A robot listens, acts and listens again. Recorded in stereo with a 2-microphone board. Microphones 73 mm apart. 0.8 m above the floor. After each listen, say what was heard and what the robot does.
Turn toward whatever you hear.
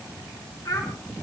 The child speaking: about 55° left or 125° left. Turn 55° left.
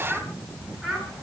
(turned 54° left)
Found it: a child speaking, straight ahead.